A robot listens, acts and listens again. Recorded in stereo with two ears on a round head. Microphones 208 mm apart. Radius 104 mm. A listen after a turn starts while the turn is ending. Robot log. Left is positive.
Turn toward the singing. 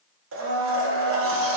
cmd idle
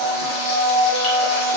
cmd idle
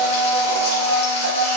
end: I can't make out singing, only a blender.